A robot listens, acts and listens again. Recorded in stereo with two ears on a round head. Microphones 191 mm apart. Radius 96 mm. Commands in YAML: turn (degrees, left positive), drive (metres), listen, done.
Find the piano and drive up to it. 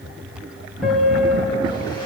turn: 30
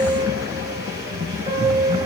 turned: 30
turn: -30
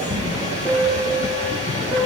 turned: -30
turn: -15
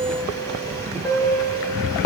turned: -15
drive: 1.0
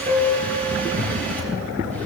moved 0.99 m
turn: 10
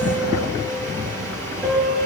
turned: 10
drive: 1.0
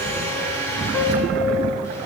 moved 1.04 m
drive: 1.0
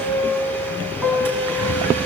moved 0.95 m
drive: 1.0
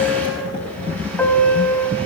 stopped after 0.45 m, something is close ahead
turn: 10
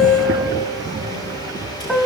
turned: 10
done: "Arrived at the piano, straight ahead."